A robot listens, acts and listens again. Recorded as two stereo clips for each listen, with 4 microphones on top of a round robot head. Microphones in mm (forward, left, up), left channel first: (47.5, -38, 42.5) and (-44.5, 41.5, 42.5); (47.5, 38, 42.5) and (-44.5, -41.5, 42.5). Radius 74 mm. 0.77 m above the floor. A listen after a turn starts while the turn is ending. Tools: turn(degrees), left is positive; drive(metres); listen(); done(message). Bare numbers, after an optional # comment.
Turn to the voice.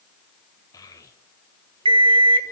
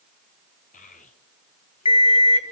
# The child speaking: 20° left.
turn(20)
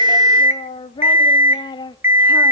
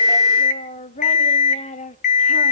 # The child speaking is now 15° left.
turn(15)
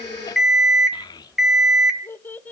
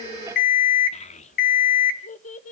# The child speaking is now 35° left.
turn(35)
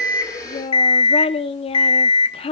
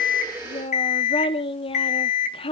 done("Facing the child speaking.")